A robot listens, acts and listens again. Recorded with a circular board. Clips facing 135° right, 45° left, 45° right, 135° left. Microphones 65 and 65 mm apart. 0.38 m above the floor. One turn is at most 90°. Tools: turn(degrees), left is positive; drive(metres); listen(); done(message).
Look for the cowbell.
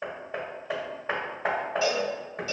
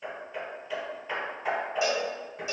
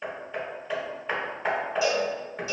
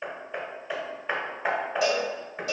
turn(degrees=90)
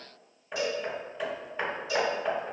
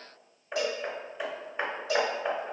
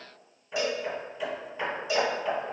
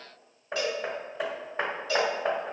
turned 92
turn(degrees=25)
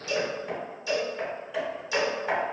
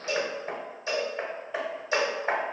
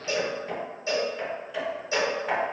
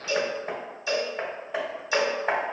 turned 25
done("Found it: a cowbell, straight ahead.")